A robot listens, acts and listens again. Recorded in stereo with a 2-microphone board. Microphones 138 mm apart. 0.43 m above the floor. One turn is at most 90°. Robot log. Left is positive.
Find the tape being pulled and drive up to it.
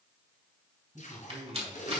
note: The tape being pulled: about 70° left or 110° left.
cmd yaw +70
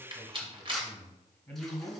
cmd idle
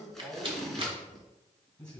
cmd fwd 1.0
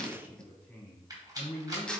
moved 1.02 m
cmd fwd 1.0
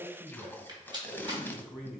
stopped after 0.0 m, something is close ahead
note: The tape being pulled is now 15° left.
cmd yaw +15
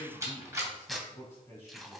end: I am next to the tape being pulled.